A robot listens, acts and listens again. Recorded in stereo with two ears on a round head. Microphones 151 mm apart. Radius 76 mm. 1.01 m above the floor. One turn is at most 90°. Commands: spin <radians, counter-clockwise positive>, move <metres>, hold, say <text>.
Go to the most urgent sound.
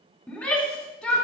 spin 0.52
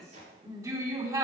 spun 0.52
spin -0.35
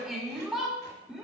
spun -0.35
move 1.0
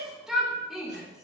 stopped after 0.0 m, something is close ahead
say Blocked. The shout is further on, straight ahead.